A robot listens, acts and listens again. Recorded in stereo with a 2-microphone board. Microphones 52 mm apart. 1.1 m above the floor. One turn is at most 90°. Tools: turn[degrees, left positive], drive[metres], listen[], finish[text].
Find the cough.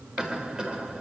Action: turn[-30]
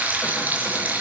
Action: listen[]
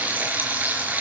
Action: listen[]
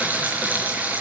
Action: finish[I heard a cough, but can't make it out now. It was about 15° left or 135° right.]